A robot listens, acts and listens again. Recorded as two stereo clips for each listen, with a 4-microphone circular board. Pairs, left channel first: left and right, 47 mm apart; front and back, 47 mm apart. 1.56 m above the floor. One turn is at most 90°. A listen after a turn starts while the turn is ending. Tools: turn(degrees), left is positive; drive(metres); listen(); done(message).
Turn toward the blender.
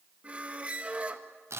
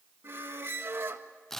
listen()
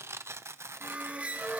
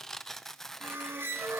listen()
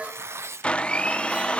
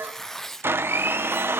turn(degrees=90)
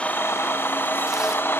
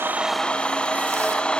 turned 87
turn(degrees=65)
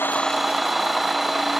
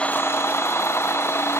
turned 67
done("Facing the blender, under 1 m away.")